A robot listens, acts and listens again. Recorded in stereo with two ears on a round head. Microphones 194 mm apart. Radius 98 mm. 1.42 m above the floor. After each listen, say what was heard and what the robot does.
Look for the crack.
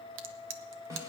The crack: about 65° right or 115° right. Turn 65° right.
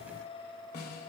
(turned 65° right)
Keep listening.
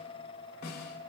I heard a crack, but can't make it out now. It was about straight ahead or 50° right.